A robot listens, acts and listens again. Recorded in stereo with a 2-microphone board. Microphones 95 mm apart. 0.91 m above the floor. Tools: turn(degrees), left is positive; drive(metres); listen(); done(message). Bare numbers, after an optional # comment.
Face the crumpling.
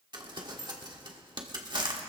# The crumpling: about 55° right or 125° right.
turn(-55)
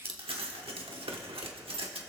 # So it is at 75° right.
turn(-75)
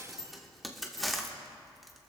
done("Facing the crumpling, 1 to 2 m away.")